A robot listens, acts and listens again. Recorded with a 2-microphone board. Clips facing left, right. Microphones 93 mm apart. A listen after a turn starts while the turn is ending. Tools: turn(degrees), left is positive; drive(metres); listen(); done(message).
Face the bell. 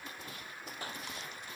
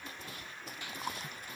listen()
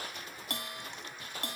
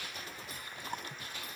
turn(degrees=90)
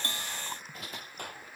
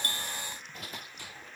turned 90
listen()
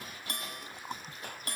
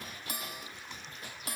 done("Found it: a bell, straight ahead.")